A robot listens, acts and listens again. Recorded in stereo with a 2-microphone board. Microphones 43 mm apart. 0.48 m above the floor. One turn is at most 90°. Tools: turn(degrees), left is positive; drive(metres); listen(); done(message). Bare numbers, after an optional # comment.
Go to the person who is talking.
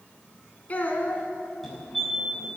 # The child speaking: about 35° left or 145° left.
turn(35)
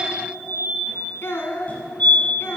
# So it is at 115° left.
turn(90)
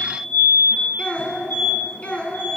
# The child speaking is now 30° left.
turn(30)
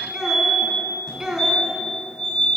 # The child speaking is now 10° right.
turn(-10)
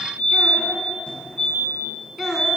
drive(1.0)
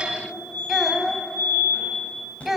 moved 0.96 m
drive(1.0)
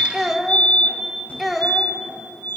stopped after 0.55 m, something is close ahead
done("I am next to the child speaking.")